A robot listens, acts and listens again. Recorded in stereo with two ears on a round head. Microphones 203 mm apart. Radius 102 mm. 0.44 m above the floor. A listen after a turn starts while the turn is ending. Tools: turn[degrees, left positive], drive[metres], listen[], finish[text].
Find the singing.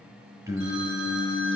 Action: turn[-30]
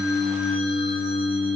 Thought: So it is at 15° left.
Action: turn[15]
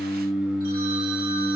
Action: finish[Found it: singing, straight ahead.]